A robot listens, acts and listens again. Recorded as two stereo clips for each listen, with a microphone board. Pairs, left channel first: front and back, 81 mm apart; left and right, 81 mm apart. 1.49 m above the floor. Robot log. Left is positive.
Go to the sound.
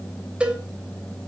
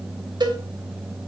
note: The cowbell: 105° right.
cmd yaw -105
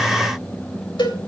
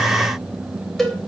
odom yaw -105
cmd fwd 1.0
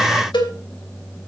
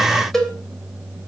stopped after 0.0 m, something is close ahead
end: Blocked. The cowbell is further on, straight ahead.